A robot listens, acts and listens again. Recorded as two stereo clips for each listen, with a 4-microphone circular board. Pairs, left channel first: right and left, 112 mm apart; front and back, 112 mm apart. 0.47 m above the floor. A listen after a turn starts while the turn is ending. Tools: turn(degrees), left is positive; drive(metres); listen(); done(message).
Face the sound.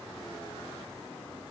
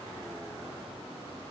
listen()
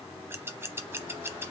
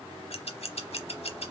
turn(degrees=20)
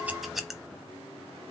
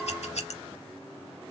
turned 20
done("Facing the scissors, under 1 m away.")